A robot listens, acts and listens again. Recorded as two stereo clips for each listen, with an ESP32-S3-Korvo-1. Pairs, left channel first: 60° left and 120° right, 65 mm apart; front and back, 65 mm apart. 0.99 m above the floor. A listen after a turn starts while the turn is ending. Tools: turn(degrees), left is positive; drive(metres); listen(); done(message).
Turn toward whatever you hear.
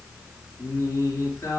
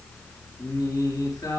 turn(degrees=15)
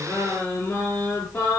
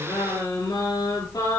done("Facing the singing, over 4 m away.")